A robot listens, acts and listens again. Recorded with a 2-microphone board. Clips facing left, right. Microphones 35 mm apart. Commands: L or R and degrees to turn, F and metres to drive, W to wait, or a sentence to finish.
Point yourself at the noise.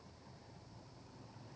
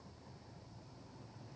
W
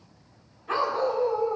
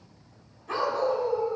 L20
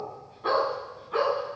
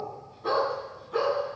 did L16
L25
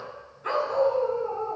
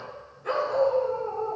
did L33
L130
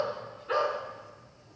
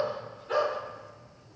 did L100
L35
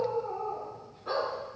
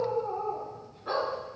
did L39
Facing the dog barking.